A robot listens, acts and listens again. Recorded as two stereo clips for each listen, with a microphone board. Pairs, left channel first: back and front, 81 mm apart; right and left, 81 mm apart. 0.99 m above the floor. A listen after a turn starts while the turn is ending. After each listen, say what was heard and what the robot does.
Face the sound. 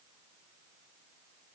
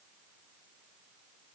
Keep listening.
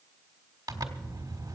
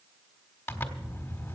The zipper: 25° right. Turn 25° right.
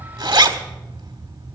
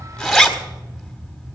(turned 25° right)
Found it: a zipper, straight ahead, 1 to 2 m away.